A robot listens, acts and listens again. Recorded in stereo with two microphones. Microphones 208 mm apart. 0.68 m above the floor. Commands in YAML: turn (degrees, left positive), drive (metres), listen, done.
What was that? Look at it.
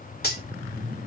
turn: 50
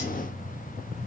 listen: true
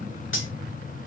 turn: 75
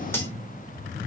listen: true
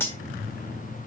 turn: 10
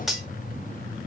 done: "Found it: cutlery clinking, straight ahead."